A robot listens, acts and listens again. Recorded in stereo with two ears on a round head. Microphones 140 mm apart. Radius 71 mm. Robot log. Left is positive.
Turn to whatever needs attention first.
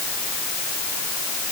cmd idle
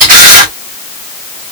cmd idle
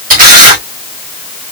end: I can't make out anything urgent to turn to.